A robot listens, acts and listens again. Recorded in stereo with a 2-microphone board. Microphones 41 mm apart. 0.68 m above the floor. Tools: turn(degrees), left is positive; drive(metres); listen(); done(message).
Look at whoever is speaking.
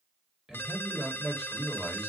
turn(degrees=-15)
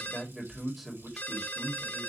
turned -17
done("Facing the man speaking, 1 to 2 m away.")